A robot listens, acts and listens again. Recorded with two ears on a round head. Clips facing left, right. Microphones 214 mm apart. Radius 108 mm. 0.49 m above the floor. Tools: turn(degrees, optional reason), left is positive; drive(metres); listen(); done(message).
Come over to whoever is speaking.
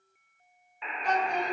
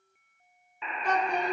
turn(degrees=-50, reason="The child speaking: about 50° right or 130° right.")
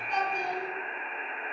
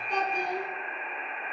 turn(degrees=-80, reason="So it is at 80° right.")
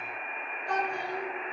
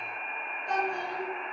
turn(degrees=-20, reason="The child speaking is now 20° right.")
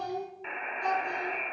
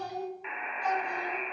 drive(metres=1.0)
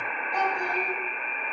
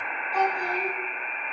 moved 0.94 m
drive(metres=1.0)
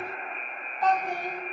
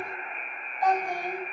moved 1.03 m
turn(degrees=-15, reason="The child speaking is now 15° right.")
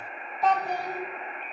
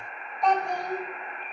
drive(metres=1.0)
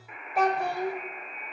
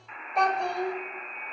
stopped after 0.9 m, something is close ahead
done("I am next to the child speaking.")